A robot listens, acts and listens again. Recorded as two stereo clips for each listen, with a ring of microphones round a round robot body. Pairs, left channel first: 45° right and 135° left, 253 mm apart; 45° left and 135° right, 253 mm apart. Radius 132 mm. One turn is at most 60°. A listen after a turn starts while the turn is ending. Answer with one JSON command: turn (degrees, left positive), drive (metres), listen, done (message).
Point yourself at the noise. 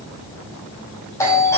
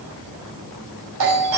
{"turn": -60}
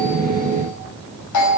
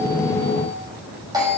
{"turn": -60}
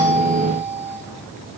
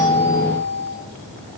{"done": "Facing the doorbell, over 4 m away."}